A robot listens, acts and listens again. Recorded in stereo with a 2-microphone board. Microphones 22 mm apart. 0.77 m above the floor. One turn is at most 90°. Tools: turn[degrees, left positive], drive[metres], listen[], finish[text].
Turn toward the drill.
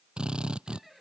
Thought: The drill: about 45° right or 135° right.
Action: turn[-45]
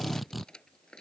Action: finish[Found it: a drill, straight ahead.]